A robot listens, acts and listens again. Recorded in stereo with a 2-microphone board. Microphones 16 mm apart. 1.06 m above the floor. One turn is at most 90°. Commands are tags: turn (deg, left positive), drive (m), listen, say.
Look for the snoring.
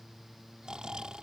<turn deg="-70"/>
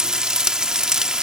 <listen/>
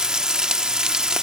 <listen/>
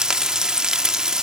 <say>I heard snoring, but can't make it out now. It was about straight ahead or 40° right.</say>